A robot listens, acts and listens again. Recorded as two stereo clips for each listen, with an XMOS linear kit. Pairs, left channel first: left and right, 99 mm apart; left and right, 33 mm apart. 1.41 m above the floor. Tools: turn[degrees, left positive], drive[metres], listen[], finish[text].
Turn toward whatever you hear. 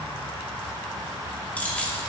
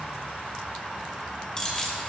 Thought: The keys jangling: about 15° left or 165° left.
Action: turn[15]
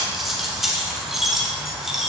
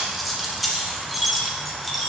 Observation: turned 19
Action: turn[30]
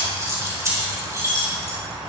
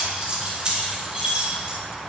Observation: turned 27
Thought: So it is at 30° right.
Action: turn[-30]
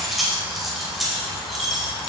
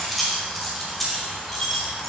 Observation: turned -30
Action: finish[Facing the keys jangling.]